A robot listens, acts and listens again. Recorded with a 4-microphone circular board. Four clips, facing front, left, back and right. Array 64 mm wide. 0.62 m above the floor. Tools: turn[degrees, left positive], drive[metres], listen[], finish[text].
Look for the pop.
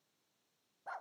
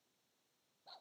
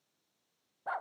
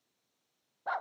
Action: listen[]
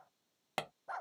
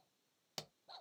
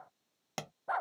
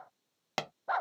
Thought: The pop: 65° right.
Action: turn[-65]
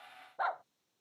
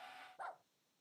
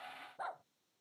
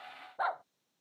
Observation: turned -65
Action: finish[I heard a pop from this way, but can't make it out now.]